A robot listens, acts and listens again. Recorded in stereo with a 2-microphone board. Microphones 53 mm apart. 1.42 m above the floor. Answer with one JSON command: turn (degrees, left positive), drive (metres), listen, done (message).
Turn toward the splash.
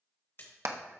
{"turn": 45}
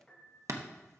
{"listen": true}
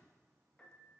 {"done": "I heard a splash, but can't make it out now. It was about straight ahead or 90° left."}